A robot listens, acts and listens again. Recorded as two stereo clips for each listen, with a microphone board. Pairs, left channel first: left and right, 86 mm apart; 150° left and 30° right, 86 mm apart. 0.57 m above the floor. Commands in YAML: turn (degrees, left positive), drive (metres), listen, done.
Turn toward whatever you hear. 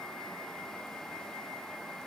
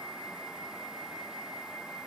listen: true
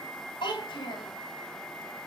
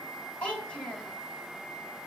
turn: 75
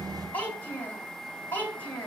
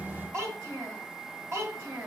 turn: 20
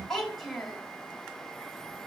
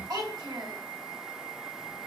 done: "Found it: a child speaking, straight ahead, 2 to 4 m away."